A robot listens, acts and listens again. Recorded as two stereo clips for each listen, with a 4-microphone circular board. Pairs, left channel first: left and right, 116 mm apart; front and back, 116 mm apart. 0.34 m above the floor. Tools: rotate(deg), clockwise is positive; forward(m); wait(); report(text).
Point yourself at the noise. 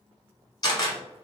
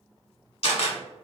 rotate(-35)
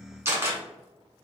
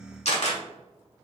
rotate(20)
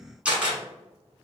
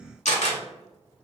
rotate(10)
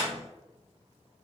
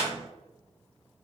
report("Found it: a camera shutter, straight ahead.")